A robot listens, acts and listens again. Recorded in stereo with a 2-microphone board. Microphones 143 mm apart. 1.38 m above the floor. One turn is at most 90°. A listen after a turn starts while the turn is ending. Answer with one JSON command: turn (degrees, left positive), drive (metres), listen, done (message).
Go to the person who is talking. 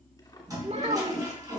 {"turn": -50}
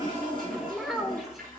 {"drive": 1.0}
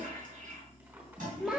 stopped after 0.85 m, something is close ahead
{"done": "I am next to the child speaking."}